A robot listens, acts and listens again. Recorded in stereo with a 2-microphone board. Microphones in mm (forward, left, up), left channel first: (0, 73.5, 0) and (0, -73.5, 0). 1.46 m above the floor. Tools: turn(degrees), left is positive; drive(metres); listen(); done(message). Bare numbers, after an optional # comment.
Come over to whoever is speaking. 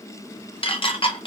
listen()
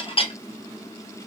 listen()
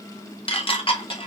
done("I can't make out anyone speaking, only dishes clattering.")